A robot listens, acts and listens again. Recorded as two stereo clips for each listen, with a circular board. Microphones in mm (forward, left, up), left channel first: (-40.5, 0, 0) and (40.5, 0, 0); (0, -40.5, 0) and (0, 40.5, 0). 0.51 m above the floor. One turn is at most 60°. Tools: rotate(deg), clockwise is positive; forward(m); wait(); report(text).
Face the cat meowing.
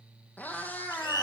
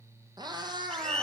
rotate(-60)
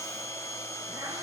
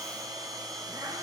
rotate(-50)
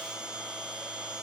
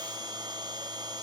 wait()
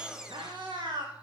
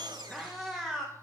report("Found it: a cat meowing, straight ahead, 2 to 4 m away.")